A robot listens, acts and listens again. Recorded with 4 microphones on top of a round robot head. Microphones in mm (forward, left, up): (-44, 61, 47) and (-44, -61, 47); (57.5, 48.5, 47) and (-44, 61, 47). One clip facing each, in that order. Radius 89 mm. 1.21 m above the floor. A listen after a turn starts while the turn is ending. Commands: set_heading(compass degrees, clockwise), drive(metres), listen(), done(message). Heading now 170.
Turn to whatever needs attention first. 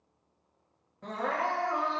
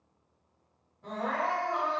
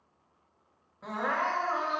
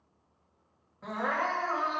set_heading(90)
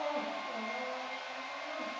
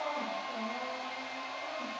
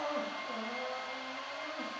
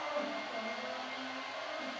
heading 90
listen()
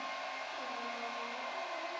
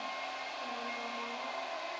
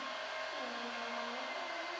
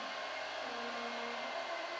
listen()
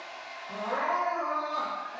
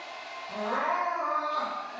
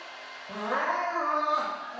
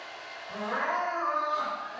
set_heading(80)
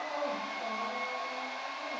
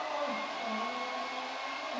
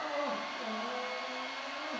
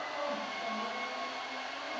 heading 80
done("Found it: crying, straight ahead, 2 to 4 m away.")